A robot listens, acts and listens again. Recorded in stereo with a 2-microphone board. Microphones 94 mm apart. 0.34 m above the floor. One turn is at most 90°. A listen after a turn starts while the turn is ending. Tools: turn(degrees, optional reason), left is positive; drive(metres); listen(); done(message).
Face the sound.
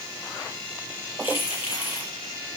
turn(degrees=90)
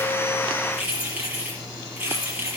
turn(degrees=-20, reason="So it is at 20° right.")
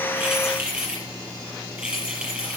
turn(degrees=-10, reason="The keys jangling is now 10° right.")
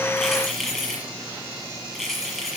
done("Found it: keys jangling, straight ahead.")